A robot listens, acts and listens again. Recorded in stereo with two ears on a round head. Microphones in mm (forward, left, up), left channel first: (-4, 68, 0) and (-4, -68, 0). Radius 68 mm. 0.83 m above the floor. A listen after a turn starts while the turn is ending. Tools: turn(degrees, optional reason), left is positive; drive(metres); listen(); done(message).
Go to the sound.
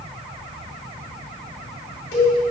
turn(degrees=70, reason="The cowbell: about 70° left or 110° left.")
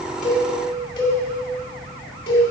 turn(degrees=35, reason="So it is at 35° left.")
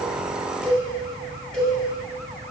turn(degrees=10, reason="The cowbell is now 10° left.")
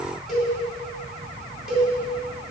drive(metres=1.0)
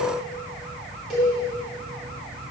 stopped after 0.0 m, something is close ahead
done("Blocked. The cowbell is further on, straight ahead.")